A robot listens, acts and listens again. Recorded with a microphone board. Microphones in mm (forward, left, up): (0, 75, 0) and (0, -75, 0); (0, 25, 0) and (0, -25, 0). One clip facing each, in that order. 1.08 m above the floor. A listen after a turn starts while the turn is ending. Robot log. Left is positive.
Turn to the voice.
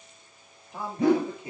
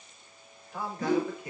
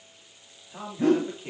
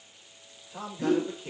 note: The man speaking: about 25° left or 155° left.
cmd yaw +25
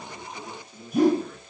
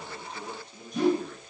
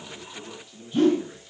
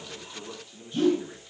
cmd yaw +30
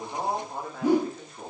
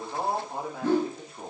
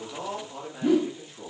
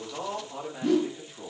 end: Found it: a man speaking, straight ahead, 2 to 4 m away.